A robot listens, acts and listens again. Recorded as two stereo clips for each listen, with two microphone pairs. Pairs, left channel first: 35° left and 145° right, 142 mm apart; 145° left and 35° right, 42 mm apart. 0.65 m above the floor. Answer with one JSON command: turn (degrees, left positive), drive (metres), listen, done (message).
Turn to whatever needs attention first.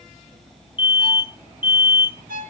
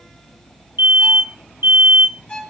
{"turn": -25}
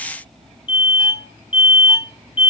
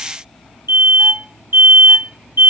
{"turn": -25}
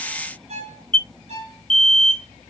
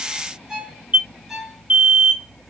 {"turn": 10}
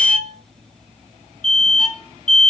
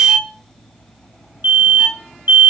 {"done": "Found it: an alarm, straight ahead."}